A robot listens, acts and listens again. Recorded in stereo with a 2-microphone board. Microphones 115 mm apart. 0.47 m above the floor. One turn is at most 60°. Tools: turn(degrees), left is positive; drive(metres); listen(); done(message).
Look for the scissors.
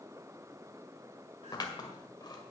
turn(degrees=35)
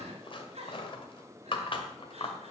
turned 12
turn(degrees=60)
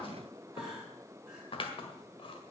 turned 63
turn(degrees=60)
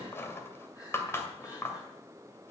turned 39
turn(degrees=25)
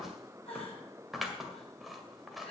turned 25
done("Facing the scissors.")